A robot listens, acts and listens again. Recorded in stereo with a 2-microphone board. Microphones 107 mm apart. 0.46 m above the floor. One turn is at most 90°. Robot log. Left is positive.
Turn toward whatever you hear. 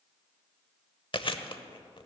note: The chewing: about 55° left or 125° left.
cmd yaw +55
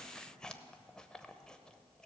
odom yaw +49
note: So it is at 10° left.
cmd yaw +10
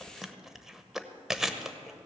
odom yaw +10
end: Found it: chewing, straight ahead.